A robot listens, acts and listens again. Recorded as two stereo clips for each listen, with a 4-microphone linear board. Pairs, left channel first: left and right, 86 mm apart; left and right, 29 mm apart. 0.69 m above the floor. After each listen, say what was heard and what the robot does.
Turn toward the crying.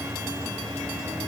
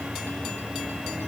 Keep listening.
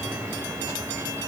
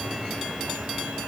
Keep listening.
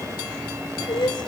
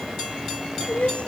The crying: about 70° left or 110° left. Turn 70° left.
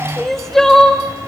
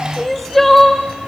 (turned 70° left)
Facing the crying.